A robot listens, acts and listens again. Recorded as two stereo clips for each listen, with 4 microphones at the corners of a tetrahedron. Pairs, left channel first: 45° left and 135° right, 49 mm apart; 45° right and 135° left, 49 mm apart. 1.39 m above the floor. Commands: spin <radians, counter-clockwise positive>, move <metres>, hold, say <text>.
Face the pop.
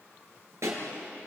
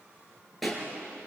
spin -2.36
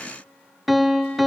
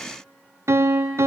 say Facing where the pop came from. I can't hear it now.